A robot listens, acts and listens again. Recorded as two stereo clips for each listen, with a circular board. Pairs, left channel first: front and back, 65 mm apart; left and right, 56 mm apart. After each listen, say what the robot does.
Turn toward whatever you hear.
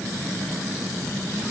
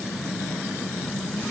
Keep listening.
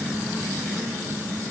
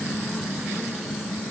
Keep listening.
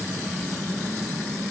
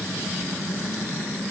I can't make out anything.